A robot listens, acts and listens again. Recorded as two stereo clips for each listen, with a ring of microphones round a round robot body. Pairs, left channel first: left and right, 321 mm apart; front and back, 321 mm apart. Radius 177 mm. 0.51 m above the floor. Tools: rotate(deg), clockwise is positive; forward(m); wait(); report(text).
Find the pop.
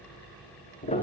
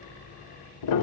wait()
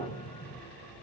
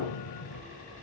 wait()
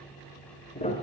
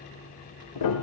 report("I can't make out a pop to turn to.")